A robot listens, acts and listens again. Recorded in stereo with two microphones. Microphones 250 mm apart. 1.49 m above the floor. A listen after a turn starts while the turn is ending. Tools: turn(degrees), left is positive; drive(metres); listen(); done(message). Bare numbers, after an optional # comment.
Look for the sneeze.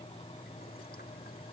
listen()
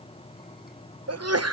turn(-90)
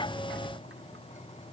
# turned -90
done("Facing where the sneeze came from. I can't hear it now.")